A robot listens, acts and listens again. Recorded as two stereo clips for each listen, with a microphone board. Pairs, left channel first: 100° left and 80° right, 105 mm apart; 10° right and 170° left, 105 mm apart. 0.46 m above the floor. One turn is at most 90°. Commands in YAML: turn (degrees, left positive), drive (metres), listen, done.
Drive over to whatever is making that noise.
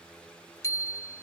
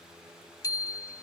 turn: 45
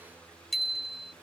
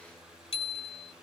turn: 10
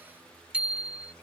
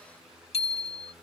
drive: 1.0
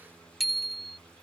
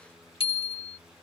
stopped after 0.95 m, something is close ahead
turn: 10
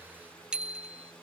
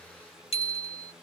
done: "Arrived at the bicycle bell, straight ahead."